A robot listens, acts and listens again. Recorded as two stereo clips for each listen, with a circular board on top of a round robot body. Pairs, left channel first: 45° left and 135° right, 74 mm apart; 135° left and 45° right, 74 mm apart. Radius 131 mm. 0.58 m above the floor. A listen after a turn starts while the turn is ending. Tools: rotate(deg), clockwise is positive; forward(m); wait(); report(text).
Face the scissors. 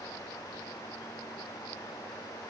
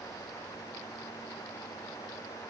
wait()
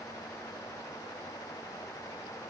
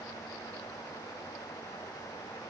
wait()
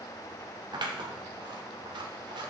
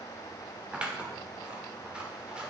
rotate(120)
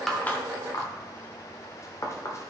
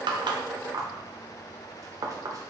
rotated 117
report("Facing the scissors.")